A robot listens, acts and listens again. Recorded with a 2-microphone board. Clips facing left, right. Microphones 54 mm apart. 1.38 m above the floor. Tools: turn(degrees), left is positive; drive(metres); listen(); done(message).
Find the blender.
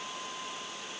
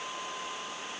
listen()
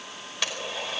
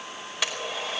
turn(degrees=-30)
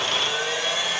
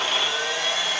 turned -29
turn(degrees=25)
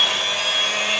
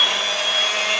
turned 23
done("Facing the blender.")